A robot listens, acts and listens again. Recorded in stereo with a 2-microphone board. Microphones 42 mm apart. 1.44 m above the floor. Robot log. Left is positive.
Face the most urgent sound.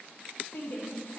note: The shout: about 60° left or 120° left.
cmd yaw +60
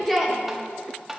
end: Facing the shout, 1 to 2 m away.